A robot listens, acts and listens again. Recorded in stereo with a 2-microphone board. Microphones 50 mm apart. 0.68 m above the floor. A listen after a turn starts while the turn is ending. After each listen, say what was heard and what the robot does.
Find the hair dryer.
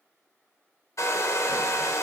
The hair dryer: about 70° left or 110° left. Turn 70° left.
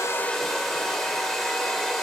Found it: a hair dryer, straight ahead, 1 to 2 m away.